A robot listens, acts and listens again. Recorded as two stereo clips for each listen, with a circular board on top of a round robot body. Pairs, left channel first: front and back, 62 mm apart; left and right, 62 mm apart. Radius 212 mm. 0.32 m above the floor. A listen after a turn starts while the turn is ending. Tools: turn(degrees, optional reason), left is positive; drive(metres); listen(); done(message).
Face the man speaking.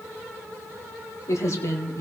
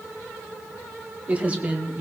turn(degrees=-30, reason="The man speaking: 30° right.")
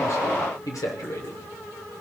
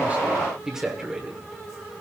turn(degrees=-10, reason="The man speaking is now 10° right.")
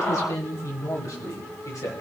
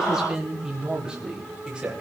turn(degrees=-15, reason="The man speaking is now 15° right.")
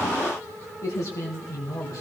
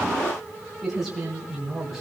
done("Found it: a man speaking, straight ahead, 2 to 4 m away.")